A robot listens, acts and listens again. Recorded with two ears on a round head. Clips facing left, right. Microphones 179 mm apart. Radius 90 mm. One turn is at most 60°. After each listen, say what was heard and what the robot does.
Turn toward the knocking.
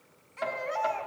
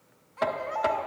The knocking: about 65° right or 115° right. Turn 60° right.
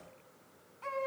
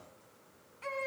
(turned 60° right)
So it is at 60° right. Turn 60° right.
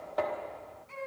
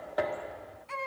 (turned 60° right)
The knocking is now 10° right. Turn 10° right.
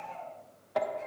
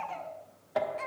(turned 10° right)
Found it: knocking, straight ahead.